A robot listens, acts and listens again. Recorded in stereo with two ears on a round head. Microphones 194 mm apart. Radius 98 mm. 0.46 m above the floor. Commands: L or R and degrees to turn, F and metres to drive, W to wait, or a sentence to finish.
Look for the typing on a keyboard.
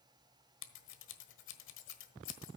W
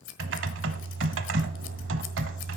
R65
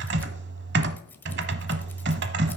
R50
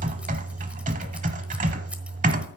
R35
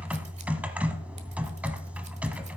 Facing the typing on a keyboard.